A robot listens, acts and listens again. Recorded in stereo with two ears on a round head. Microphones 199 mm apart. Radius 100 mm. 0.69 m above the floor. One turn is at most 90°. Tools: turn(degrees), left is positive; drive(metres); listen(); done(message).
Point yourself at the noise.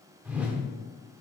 turn(degrees=-30)
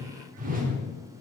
turn(degrees=-90)
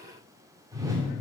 turn(degrees=-15)
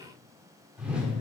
done("Found it: a whoosh, straight ahead.")